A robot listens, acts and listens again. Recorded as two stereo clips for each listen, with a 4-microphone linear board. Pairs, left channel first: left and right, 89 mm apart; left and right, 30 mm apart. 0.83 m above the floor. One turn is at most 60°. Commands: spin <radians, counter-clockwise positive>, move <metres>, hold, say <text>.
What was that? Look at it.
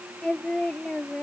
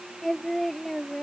spin 0.52
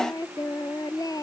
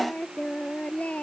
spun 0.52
spin 1.05
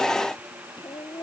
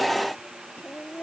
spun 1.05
spin 1.05
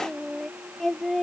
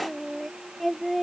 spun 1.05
say Facing the singing.